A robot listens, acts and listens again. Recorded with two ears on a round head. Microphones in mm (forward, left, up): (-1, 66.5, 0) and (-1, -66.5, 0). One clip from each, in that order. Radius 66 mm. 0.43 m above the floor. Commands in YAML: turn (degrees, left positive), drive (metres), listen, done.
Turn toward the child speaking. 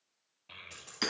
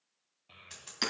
turn: 40
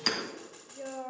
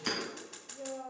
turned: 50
turn: 85
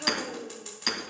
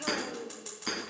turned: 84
done: "Facing the child speaking, under 1 m away."